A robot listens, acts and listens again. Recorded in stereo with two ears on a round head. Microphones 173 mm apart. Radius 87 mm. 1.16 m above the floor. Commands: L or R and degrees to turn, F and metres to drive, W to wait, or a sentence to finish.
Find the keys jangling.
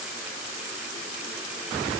W
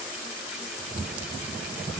W
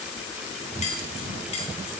L30
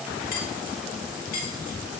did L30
L135
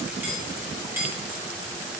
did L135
R15
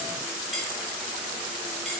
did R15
W
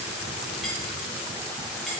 W
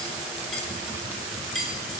Found it: keys jangling, straight ahead.